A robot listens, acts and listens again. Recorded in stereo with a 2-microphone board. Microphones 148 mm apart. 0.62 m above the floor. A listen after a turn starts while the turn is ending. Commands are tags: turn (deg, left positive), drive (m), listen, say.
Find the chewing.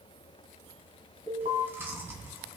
<turn deg="-30"/>
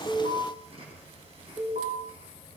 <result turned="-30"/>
<turn deg="-140"/>
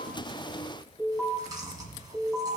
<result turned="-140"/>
<turn deg="-30"/>
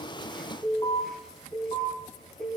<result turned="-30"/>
<listen/>
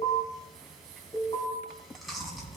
<say>Facing the chewing, 2 to 4 m away.</say>